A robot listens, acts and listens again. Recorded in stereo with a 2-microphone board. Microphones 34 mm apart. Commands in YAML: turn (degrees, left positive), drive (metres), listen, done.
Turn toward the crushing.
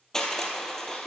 turn: 30
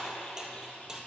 turn: -20
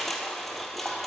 done: "Facing the crushing, 1 to 2 m away."